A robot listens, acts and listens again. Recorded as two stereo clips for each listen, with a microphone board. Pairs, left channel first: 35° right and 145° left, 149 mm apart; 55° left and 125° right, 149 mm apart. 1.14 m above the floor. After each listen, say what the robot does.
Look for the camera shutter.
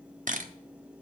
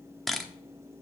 Turn 145° left.
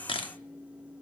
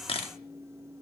Turn 15° left.
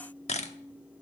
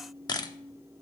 Found it: a camera shutter, straight ahead, under 1 m away.